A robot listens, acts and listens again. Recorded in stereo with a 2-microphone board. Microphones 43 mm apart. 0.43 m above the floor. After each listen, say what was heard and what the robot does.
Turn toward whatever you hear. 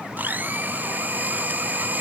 The blender: about 45° right or 135° right. Turn 45° right.
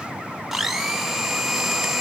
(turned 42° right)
Found it: a blender, straight ahead.